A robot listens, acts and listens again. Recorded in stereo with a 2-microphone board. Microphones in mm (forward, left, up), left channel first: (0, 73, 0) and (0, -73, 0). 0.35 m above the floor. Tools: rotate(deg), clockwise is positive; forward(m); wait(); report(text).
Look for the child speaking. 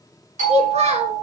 rotate(50)
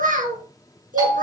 rotate(80)
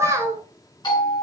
rotate(20)
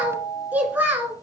rotate(15)
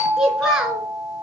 report("Found it: a child speaking, straight ahead, 2 to 4 m away.")